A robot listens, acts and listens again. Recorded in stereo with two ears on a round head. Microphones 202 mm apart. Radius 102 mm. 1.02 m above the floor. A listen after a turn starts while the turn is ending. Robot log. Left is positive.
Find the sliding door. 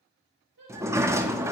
cmd yaw -30
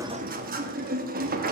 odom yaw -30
note: So it is at 140° right.
cmd yaw -140
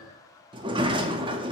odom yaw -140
note: The sliding door is now 20° right.
cmd yaw -20
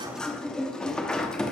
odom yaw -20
end: Facing the sliding door.